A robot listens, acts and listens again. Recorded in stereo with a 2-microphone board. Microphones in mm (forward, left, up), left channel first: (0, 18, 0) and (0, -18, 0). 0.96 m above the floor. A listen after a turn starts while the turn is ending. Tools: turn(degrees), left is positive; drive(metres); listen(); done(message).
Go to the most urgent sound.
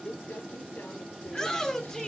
turn(degrees=30)
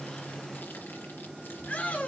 turn(degrees=135)
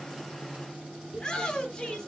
turn(degrees=20)
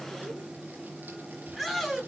drive(metres=1.0)
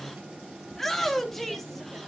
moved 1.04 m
drive(metres=1.0)
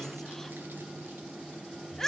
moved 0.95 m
turn(degrees=10)
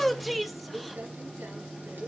drive(metres=1.0)
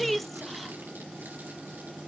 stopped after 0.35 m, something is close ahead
done("I am next to the shout.")